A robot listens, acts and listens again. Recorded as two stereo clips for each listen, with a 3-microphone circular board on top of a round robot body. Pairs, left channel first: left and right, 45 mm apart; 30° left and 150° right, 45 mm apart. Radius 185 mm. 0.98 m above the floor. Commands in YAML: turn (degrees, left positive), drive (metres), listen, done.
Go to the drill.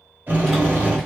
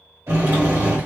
turn: -135
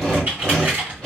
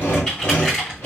drive: 1.0
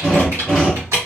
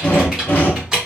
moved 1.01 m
turn: -10
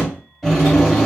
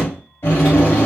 drive: 1.0
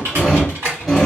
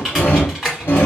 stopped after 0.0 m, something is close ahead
done: "I am next to the drill."